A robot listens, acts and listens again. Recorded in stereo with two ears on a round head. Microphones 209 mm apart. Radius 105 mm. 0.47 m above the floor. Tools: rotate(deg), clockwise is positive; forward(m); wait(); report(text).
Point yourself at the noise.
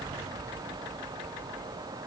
wait()
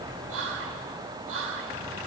rotate(55)
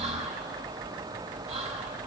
rotate(35)
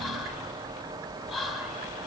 report("Found it: whispering, straight ahead.")